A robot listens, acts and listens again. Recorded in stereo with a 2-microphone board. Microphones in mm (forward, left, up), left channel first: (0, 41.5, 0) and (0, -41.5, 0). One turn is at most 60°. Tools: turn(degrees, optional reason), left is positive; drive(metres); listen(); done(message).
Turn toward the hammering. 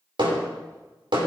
turn(degrees=-60, reason="The hammering: about 75° right or 105° right.")
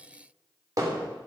turn(degrees=-45, reason="So it is at 45° right.")
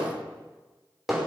done("Found it: hammering, straight ahead, over 4 m away.")